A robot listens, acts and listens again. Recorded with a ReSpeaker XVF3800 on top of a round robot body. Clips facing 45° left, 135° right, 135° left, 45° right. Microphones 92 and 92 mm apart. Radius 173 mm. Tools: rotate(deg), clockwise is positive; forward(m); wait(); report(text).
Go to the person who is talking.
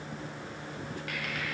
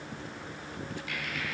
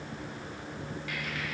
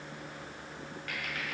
wait()
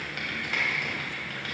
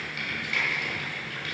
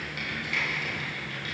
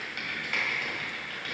wait()
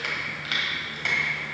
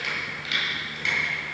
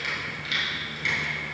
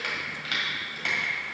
report("I can't make out anyone speaking, only typing on a keyboard.")